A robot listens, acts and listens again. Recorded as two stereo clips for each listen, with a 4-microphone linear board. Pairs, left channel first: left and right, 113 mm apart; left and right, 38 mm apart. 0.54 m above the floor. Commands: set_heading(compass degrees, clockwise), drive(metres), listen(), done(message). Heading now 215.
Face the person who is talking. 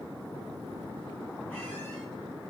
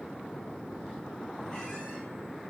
listen()
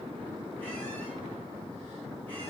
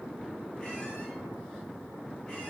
listen()
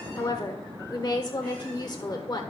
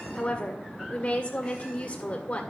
set_heading(180)
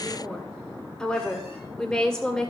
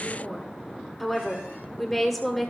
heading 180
done("Found it: a woman speaking, straight ahead.")